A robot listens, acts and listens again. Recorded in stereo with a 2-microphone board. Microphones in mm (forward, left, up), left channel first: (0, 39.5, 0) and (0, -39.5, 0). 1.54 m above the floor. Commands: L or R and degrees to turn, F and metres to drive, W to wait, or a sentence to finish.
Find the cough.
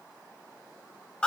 W
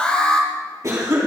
R45
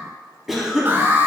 Found it: a cough, straight ahead, 2 to 4 m away.